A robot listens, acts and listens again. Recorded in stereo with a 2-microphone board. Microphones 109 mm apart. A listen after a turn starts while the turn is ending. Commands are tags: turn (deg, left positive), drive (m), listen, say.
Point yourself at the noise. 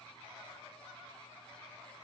<listen/>
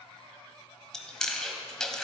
<turn deg="30"/>
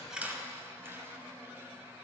<listen/>
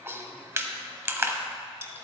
<turn deg="-20"/>
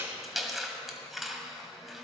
<say>Facing the chewing, 1 to 2 m away.</say>